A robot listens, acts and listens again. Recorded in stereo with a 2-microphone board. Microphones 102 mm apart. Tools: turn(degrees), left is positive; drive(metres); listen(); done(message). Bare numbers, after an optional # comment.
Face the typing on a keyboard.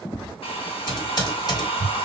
# The typing on a keyboard: about 40° left or 140° left.
turn(40)
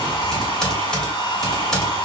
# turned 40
done("Facing the typing on a keyboard, 1 to 2 m away.")